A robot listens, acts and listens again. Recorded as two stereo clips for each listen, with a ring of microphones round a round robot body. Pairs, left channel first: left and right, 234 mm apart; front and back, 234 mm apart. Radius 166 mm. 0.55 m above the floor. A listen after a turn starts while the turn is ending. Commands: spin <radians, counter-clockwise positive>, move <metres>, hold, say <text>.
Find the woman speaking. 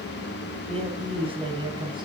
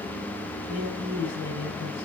spin -0.35
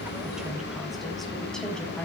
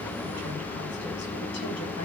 say Found it: a woman speaking, straight ahead.